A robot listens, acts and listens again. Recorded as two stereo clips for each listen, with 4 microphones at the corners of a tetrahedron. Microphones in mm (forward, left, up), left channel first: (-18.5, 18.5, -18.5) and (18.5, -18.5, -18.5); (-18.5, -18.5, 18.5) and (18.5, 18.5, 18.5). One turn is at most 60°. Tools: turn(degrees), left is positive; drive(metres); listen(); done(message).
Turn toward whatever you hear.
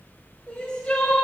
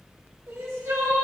turn(degrees=60)
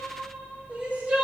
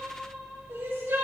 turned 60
turn(degrees=15)
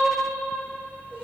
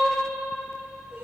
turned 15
listen()
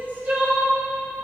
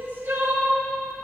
done("Facing the crying, 2 to 4 m away.")